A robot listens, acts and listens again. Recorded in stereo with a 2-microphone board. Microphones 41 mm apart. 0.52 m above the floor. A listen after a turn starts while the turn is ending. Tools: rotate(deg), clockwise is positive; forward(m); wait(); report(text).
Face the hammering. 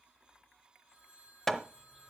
rotate(-30)
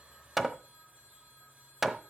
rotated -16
rotate(10)
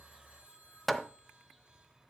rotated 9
report("Found it: hammering, straight ahead, under 1 m away.")